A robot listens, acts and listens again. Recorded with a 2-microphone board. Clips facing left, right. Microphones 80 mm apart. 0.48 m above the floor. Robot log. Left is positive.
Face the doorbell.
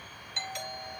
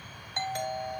note: The doorbell: about 40° right or 140° right.
cmd yaw -40
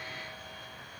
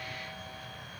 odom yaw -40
cmd idle
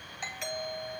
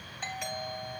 end: Facing the doorbell, 2 to 4 m away.